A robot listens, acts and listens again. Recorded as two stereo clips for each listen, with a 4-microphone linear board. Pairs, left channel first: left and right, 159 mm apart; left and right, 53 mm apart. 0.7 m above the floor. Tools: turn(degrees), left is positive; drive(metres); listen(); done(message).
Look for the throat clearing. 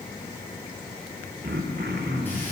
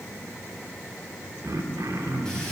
turn(degrees=-90)
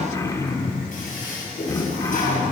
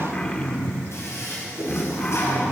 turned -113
turn(degrees=20)
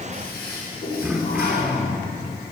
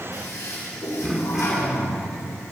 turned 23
done("Found it: throat clearing, straight ahead, under 1 m away.")